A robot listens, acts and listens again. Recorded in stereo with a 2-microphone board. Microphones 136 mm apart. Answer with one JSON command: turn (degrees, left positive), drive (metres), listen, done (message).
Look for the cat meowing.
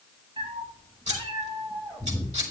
{"turn": -35}
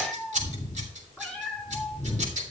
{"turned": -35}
{"turn": 10}
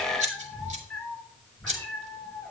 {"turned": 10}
{"done": "Found it: a cat meowing, straight ahead."}